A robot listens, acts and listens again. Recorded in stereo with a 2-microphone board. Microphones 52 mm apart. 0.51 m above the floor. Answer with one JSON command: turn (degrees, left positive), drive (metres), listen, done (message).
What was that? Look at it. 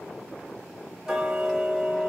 {"turn": -30}
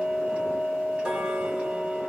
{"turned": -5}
{"turn": -20}
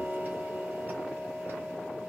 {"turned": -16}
{"turn": -145}
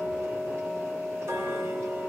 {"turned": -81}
{"turn": -65}
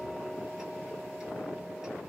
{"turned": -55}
{"turn": -10}
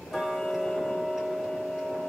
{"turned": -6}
{"done": "Found it: ticking, straight ahead."}